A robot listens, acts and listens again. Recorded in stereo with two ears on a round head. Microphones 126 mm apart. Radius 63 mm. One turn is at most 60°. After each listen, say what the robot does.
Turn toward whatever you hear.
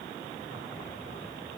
Keep listening.
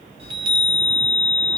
Turn 40° right.
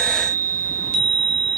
Turn 60° right.
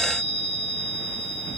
Turn 40° right.
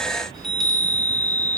Found it: a chime, straight ahead.